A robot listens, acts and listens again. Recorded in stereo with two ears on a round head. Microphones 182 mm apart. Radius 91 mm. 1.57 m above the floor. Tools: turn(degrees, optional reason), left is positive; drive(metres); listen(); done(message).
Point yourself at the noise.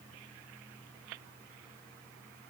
listen()
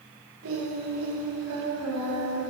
turn(degrees=-90)
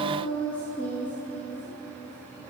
turn(degrees=10, reason="So it is at 10° left.")
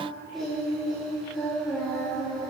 done("Facing the singing.")